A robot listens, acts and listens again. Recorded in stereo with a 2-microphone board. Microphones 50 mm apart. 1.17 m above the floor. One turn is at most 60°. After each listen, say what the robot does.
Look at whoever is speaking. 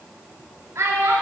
Turn 60° right.
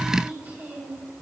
Turn 40° right.
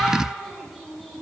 Found it: a child speaking, straight ahead, 1 to 2 m away.